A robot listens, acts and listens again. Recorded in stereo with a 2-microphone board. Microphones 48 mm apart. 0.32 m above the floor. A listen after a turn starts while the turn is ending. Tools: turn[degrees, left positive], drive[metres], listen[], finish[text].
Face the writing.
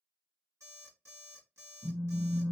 Action: listen[]
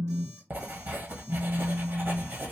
Thought: The writing: about 45° right or 135° right.
Action: turn[-45]
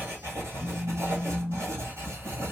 Thought: So it is at 90° right.
Action: turn[-90]
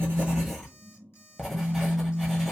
Action: finish[Facing the writing.]